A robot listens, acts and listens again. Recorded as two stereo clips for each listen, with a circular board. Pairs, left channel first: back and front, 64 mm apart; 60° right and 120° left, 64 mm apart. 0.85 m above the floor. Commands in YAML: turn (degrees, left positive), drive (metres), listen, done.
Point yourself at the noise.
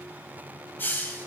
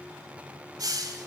turn: 125
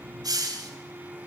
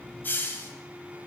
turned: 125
done: "Found it: a hiss, straight ahead, 1 to 2 m away."